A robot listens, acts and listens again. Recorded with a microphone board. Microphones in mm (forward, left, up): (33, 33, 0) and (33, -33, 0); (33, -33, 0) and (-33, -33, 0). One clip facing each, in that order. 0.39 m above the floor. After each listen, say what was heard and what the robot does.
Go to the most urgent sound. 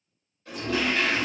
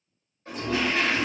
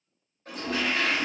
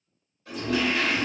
Keep listening.
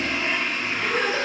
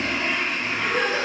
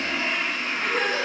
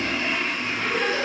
Drive 1.0 m forward.
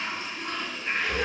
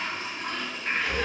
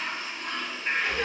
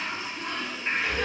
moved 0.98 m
Keep listening.
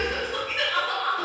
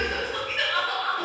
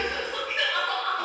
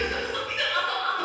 The crying is now 10° left. Turn 10° left.
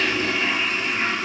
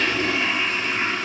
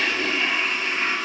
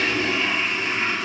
Keep listening.
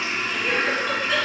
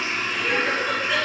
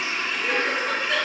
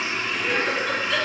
Drive 1.0 m forward.
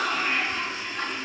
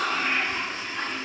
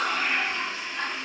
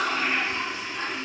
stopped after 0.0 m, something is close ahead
I am next to the crying.